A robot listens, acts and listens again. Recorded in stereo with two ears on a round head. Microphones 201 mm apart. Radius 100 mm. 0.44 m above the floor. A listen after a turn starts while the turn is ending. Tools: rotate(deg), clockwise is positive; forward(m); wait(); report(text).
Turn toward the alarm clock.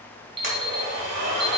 rotate(25)
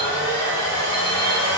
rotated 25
wait()
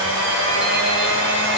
wait()
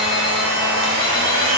report("I heard an alarm clock, but can't make it out now. It was about straight ahead or 130° right.")